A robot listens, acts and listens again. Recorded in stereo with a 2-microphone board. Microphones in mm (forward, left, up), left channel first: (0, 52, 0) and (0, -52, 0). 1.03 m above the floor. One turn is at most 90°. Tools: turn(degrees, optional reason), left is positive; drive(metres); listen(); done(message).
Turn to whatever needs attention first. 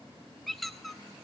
listen()
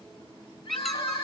turn(degrees=65, reason="The crying: about 65° left or 115° left.")
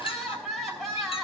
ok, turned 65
done("Found it: crying, straight ahead, over 4 m away.")